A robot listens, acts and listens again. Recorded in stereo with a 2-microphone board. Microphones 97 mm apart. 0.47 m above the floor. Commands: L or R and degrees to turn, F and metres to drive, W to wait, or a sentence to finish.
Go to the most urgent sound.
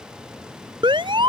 R55
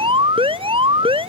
R70
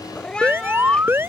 R25
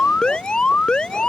L10
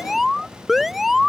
F1.0
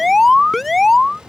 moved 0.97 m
F1.0
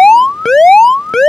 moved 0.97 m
F1.0
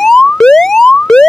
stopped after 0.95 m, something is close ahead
I am next to the alarm.